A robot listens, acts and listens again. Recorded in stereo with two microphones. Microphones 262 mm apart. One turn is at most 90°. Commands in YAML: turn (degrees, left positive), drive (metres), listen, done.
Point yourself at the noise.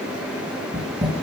turn: -25
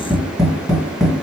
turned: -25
done: "Found it: tapping, straight ahead."